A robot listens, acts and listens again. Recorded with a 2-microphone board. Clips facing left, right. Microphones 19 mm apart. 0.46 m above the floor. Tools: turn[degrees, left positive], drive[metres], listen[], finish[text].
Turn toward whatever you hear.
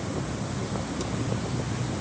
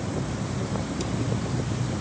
Action: listen[]
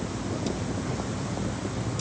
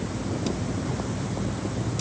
Action: listen[]
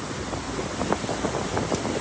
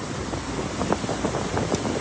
Action: finish[I can't make out anything.]